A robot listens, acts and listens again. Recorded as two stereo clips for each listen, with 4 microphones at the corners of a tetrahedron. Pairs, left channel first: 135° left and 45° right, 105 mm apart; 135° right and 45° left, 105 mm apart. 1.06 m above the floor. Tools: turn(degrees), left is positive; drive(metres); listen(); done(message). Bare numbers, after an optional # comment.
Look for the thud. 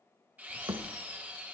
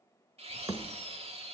done("Facing the thud, 1 to 2 m away.")